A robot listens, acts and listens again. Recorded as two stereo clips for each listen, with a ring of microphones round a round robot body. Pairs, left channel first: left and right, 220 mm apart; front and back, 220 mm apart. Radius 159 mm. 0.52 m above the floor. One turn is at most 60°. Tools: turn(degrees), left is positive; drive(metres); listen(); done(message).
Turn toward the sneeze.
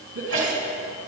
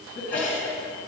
turn(degrees=-60)
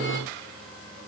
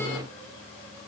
turn(degrees=-25)
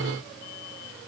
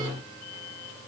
done("I heard a sneeze from this way, but can't make it out now.")